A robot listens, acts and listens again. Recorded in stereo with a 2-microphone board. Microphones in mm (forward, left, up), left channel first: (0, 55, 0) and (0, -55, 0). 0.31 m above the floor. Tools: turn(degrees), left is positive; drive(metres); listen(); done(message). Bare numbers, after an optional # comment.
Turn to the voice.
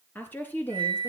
# The woman speaking: about 20° left or 160° left.
turn(20)
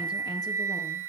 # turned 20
listen()
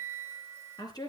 # So it is at 140° left.
turn(140)
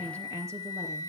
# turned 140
# The woman speaking is now 25° right.
turn(-25)
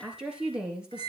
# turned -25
# The woman speaking is now 10° right.
turn(-10)
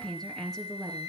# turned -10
done("Facing the woman speaking.")